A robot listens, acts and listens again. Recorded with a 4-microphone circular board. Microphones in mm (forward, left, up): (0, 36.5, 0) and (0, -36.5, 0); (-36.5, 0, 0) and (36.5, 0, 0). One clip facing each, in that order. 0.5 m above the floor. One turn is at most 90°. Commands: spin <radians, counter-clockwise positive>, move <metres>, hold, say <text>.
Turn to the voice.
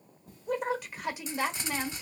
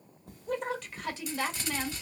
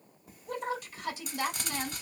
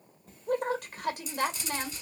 spin 0.26
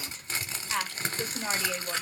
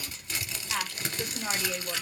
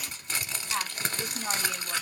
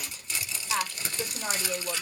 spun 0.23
say Facing the woman speaking, 1 to 2 m away.